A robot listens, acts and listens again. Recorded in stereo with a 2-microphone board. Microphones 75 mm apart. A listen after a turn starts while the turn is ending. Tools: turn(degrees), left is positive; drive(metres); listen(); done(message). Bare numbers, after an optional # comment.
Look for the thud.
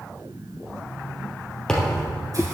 turn(30)
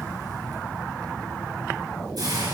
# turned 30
listen()
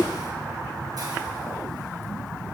done("I heard a thud, but can't make it out now. It was about 20° right or 140° left.")